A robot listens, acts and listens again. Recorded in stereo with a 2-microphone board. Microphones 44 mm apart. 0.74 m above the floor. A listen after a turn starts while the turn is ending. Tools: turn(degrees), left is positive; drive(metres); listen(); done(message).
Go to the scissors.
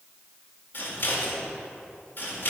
turn(degrees=50)
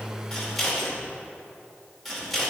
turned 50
drive(metres=1.0)
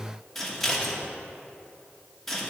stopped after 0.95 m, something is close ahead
done("Arrived at the scissors, straight ahead.")